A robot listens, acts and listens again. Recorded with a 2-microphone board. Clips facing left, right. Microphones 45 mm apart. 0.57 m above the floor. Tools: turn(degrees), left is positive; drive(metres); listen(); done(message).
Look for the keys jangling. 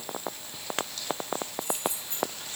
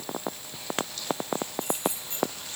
turn(degrees=-75)
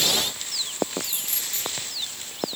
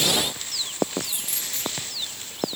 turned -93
turn(degrees=-15)
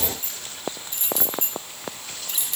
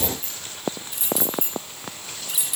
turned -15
turn(degrees=-10)
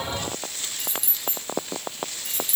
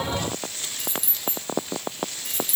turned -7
done("Facing the keys jangling.")